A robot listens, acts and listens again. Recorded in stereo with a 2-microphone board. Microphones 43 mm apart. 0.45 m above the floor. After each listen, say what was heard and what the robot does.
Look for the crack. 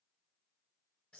Keep listening.
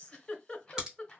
The crack: about 20° right or 160° right. Turn 20° right.
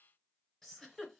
Keep listening.
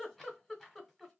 I heard a crack, but can't make it out now. It was about straight ahead or 140° right.